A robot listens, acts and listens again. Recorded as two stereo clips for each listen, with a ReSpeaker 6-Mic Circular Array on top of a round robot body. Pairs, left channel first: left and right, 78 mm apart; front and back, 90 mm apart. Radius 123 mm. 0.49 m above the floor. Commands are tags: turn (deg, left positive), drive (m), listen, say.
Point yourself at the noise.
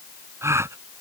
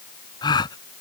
<turn deg="-40"/>
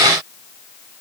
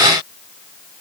<say>I heard a gasp from this way, but can't make it out now.</say>